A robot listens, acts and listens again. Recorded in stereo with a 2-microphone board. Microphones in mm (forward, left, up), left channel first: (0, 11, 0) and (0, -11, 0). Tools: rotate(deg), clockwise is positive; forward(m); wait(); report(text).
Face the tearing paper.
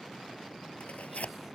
rotate(-90)
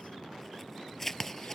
rotate(-10)
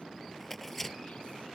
report("Found it: tearing paper, straight ahead.")